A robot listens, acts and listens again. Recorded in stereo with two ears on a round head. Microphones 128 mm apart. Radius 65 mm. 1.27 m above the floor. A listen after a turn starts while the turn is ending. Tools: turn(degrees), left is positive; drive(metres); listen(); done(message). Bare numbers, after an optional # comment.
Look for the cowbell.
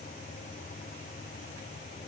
listen()
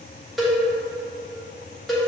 turn(30)
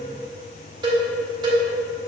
# So it is at 30° right.
turn(-30)
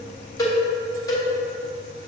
# The cowbell is now 25° left.
turn(25)
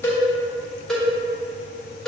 done("Found it: a cowbell, straight ahead.")